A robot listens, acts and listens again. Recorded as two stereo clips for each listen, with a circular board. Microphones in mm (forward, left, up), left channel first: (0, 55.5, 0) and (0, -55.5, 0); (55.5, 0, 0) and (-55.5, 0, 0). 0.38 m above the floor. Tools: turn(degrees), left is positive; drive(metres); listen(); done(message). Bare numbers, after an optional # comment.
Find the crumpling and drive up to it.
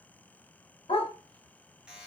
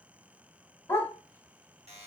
listen()
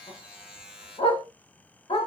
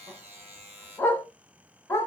listen()
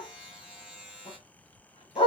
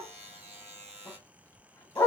done("I can't make out crumpling to turn to.")